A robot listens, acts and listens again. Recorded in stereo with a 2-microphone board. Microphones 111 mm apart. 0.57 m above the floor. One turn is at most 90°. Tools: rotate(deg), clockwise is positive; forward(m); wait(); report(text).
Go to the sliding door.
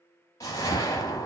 wait()
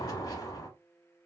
wait()
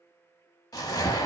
report("I can't make out a sliding door to turn to.")